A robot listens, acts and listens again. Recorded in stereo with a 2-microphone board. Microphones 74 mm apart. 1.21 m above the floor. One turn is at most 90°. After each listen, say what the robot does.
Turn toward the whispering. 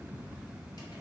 Keep listening.
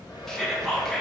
Turn 30° left.
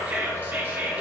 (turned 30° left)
Turn 25° right.
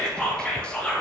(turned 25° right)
Turn 15° left.
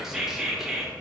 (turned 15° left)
Facing the whispering, 1 to 2 m away.